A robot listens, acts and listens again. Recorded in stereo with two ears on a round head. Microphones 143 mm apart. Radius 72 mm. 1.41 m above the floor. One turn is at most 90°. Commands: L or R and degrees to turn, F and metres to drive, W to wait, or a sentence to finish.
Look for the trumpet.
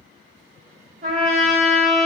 R45
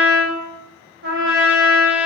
R85
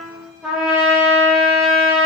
Found it: a trumpet, straight ahead, under 1 m away.